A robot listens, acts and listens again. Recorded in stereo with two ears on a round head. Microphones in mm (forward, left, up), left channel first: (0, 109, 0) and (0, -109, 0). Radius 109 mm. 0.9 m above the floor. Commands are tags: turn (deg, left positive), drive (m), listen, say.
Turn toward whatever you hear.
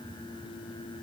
<listen/>
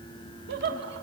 <turn deg="-45"/>
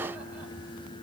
<listen/>
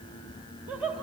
<say>Found it: laughter, straight ahead.</say>